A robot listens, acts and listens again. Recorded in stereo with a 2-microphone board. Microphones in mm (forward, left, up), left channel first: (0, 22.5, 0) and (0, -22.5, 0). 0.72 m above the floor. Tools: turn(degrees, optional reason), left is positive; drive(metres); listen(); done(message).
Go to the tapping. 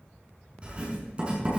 listen()
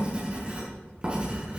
listen()
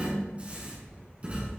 done("I can't make out tapping, only writing.")